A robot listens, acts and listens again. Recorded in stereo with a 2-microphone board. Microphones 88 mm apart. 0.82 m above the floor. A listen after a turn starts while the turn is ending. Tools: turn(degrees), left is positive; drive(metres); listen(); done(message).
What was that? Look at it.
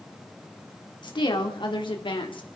turn(degrees=65)
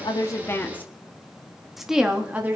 turn(degrees=-20)
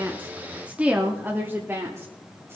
turn(degrees=-25)
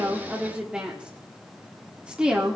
turn(degrees=-10)
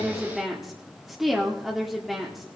done("Facing the woman speaking, 1 to 2 m away.")